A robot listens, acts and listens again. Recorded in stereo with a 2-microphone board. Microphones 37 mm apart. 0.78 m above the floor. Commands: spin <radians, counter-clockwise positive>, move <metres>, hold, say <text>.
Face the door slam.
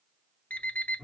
hold
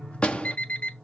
spin 0.52
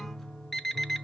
hold
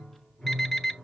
say I heard a door slam, but can't make it out now. It was about straight ahead or 120° left.